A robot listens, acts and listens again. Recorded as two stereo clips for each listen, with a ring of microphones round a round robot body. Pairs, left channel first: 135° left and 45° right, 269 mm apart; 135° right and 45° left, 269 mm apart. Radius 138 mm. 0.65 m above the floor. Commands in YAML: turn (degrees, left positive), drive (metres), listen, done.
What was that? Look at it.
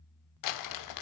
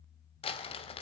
turn: 155
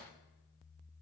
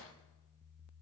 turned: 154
listen: true
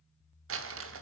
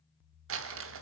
done: "Found it: crumpling, straight ahead."